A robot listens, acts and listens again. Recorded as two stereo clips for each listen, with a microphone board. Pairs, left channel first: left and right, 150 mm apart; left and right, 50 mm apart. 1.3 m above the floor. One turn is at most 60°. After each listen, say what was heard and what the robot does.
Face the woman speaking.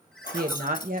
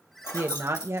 The woman speaking: about 65° right or 115° right. Turn 60° right.
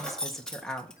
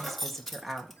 Facing the woman speaking.